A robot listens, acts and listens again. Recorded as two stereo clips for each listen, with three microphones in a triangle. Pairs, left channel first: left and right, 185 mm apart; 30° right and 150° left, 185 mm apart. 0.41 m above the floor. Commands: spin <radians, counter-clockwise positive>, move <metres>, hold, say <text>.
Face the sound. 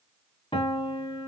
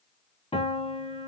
spin 0.52
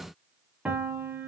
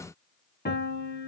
say Facing the piano, 1 to 2 m away.